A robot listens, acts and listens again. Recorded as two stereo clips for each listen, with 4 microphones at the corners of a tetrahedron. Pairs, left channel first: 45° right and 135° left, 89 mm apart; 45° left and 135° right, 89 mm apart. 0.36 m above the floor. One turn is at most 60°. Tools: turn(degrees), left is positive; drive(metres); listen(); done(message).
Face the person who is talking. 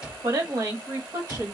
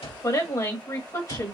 turn(degrees=60)
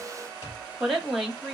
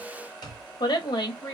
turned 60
turn(degrees=45)
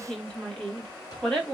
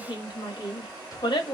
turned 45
turn(degrees=35)
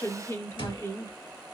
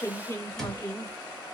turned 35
done("Facing the woman speaking.")